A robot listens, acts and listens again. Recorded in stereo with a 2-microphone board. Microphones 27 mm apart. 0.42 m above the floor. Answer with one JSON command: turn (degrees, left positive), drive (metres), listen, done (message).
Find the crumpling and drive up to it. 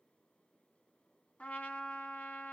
{"listen": true}
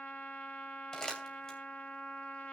{"turn": 25}
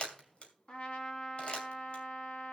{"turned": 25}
{"turn": 130}
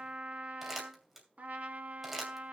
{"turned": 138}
{"turn": -10}
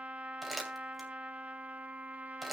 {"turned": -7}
{"drive": 1.0}
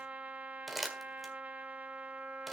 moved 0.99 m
{"drive": 1.0}
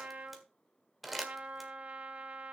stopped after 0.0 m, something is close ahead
{"done": "Arrived at the crumpling, straight ahead."}